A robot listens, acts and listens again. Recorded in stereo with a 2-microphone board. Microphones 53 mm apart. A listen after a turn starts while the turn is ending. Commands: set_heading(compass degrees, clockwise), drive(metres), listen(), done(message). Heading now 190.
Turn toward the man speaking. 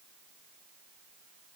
listen()
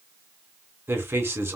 set_heading(240)
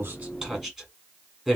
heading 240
set_heading(250)
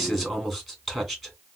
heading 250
done("Found it: a man speaking, straight ahead, 2 to 4 m away.")